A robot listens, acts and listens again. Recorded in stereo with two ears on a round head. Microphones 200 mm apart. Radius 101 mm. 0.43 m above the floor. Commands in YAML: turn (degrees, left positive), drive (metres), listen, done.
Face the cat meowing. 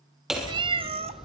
turn: -30
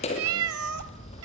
turn: -105
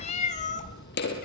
turn: 30
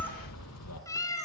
turn: 15
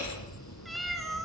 done: "Facing the cat meowing."